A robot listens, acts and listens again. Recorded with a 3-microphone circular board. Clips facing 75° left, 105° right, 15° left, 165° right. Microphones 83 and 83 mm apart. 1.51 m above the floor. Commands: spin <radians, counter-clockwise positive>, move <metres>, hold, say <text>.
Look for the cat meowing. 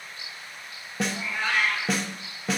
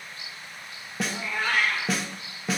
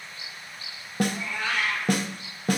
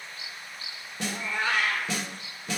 spin -2.18
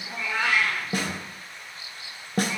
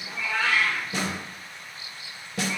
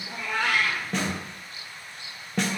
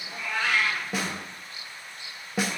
say Facing the cat meowing, 2 to 4 m away.